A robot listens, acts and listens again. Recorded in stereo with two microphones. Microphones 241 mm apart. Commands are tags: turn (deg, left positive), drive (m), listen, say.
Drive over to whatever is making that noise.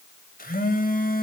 <turn deg="35"/>
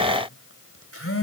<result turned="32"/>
<turn deg="110"/>
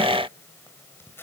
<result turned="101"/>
<turn deg="10"/>
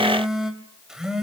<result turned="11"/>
<drive m="1.0"/>
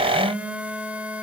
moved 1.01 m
<drive m="1.0"/>
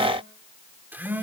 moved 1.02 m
<turn deg="-10"/>
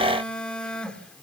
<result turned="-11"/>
<drive m="1.0"/>
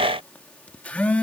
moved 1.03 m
<drive m="1.0"/>
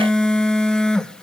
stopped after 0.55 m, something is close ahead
<say>Arrived at the phone buzzing, straight ahead.</say>